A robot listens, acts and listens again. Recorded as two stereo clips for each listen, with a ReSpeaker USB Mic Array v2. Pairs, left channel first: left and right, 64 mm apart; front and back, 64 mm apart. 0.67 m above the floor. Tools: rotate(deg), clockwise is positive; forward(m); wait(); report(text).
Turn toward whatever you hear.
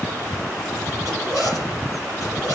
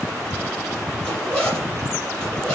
rotate(-80)
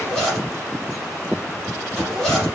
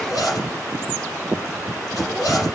report("Found it: a zipper, straight ahead.")